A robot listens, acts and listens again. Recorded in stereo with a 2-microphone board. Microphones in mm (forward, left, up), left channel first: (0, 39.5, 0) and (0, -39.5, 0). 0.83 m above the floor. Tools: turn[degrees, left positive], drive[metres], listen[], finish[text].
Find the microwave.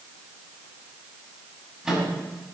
Action: turn[-30]
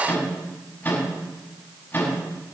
Thought: So it is at 25° left.
Action: turn[25]
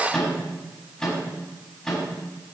Thought: The microwave is now 10° left.
Action: turn[10]
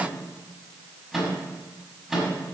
Action: finish[Facing the microwave.]